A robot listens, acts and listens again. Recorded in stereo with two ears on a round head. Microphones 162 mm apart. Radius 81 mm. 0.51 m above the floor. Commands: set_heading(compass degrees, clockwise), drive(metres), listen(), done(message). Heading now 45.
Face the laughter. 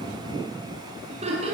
set_heading(80)
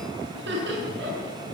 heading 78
set_heading(193)
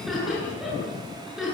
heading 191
done("Facing the laughter, over 4 m away.")